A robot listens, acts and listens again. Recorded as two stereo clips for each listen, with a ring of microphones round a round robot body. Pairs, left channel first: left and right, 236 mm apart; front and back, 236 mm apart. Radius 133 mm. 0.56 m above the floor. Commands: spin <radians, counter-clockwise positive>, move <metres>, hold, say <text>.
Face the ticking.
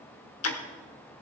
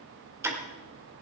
spin 1.75
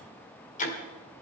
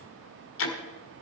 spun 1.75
spin 0.52
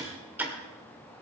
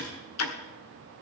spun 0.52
spin -0.17
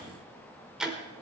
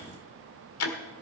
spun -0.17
say Found it: ticking, straight ahead, 1 to 2 m away.